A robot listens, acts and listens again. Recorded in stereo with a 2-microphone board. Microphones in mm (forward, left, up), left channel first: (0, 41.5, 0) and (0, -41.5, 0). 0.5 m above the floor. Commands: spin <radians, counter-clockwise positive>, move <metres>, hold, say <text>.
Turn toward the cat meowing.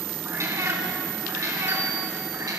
spin -0.87
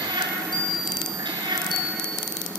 spin -1.31
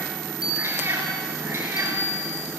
spin -0.52
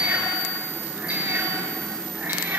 spin -0.44
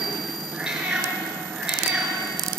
spin -0.17
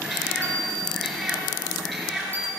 say Facing the cat meowing.